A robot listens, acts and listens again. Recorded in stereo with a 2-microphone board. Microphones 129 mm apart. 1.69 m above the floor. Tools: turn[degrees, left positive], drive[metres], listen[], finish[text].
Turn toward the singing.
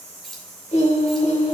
Thought: The singing: about 60° left or 120° left.
Action: turn[60]
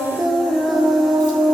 Action: finish[Found it: singing, straight ahead, 1 to 2 m away.]